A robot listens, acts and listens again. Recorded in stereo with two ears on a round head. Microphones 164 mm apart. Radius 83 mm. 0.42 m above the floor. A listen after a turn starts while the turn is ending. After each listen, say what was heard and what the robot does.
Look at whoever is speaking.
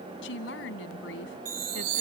The woman speaking: about 70° left or 110° left. Turn 70° left.
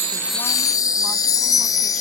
Keep listening.
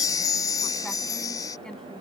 Keep listening.
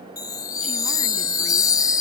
I heard a woman speaking, but can't make it out now. It was about straight ahead or 40° left.